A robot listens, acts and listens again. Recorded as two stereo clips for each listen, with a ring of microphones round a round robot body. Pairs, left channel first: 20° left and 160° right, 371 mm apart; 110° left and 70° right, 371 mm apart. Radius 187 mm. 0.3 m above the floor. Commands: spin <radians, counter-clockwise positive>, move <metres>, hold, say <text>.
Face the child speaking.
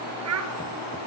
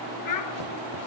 spin 2.71
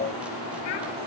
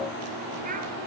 hold
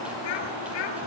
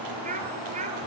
say Found it: a child speaking, straight ahead, over 4 m away.